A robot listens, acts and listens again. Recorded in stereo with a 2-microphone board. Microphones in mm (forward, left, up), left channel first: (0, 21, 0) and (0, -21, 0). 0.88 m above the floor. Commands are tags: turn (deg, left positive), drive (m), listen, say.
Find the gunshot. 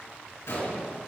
<turn deg="90"/>
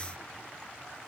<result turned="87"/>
<say>Facing where the gunshot came from. I can't hear it now.</say>